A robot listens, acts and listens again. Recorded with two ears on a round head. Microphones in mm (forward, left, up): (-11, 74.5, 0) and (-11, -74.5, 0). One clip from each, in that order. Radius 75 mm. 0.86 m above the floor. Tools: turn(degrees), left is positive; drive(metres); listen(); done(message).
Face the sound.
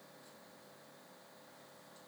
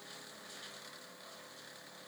listen()
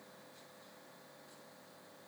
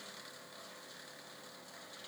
listen()
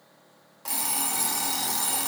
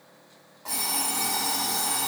turn(degrees=55)
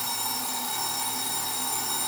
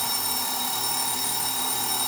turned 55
done("Facing the alarm clock.")